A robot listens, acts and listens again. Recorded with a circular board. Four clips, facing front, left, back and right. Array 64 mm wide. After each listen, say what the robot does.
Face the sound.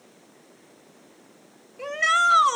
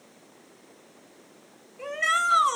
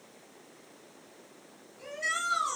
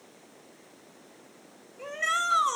Turn 15° left.
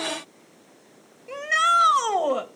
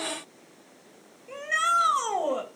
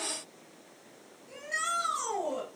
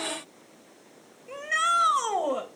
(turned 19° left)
Facing the shout.